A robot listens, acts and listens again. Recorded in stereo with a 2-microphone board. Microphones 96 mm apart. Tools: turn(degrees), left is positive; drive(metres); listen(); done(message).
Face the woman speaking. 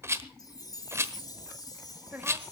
turn(degrees=-15)
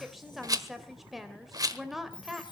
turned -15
done("Facing the woman speaking, 2 to 4 m away.")